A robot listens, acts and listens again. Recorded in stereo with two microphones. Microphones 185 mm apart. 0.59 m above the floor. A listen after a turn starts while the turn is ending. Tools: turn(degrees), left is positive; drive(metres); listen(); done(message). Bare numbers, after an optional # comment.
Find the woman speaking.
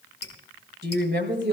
# The woman speaking: about 70° right or 110° right.
turn(-70)
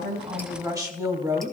# So it is at 20° right.
turn(-20)
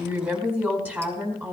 # The woman speaking is now 10° right.
turn(-10)
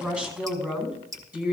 # The woman speaking is now 10° right.
turn(-10)
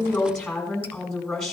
done("Found it: a woman speaking, straight ahead, over 4 m away.")